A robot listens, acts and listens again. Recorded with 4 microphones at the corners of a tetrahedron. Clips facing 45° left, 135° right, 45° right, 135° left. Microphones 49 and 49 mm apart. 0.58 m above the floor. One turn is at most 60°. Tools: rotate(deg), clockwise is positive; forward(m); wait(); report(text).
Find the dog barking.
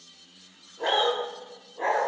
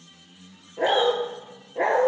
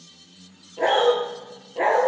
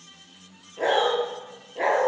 rotate(60)
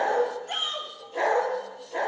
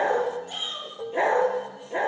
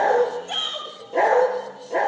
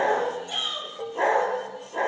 rotate(60)
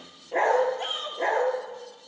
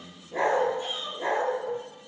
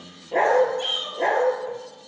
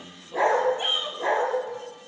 report("Facing the dog barking, 2 to 4 m away.")